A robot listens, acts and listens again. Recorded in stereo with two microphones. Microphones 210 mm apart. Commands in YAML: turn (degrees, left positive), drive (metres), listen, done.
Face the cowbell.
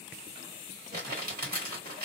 listen: true
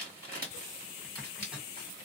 listen: true
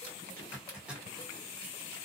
done: "I can't make out a cowbell to turn to."